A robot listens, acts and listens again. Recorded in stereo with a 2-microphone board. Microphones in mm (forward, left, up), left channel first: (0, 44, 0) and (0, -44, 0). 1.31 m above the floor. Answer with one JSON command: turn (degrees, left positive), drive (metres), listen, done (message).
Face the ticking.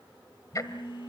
{"turn": 40}
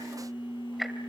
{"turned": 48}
{"done": "Found it: ticking, straight ahead."}